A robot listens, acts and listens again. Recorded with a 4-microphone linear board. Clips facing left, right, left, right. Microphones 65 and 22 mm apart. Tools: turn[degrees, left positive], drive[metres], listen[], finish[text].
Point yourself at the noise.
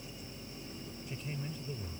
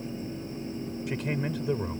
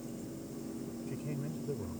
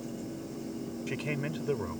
Action: turn[-90]
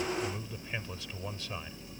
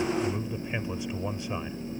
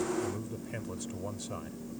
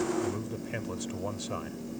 Thought: So it is at 20° right.
Action: turn[-20]
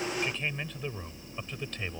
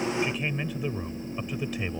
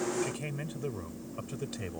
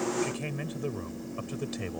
Thought: The man speaking is now 10° right.
Action: turn[-10]
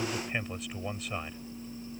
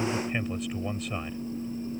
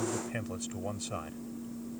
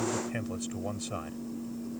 Action: finish[Facing the man speaking.]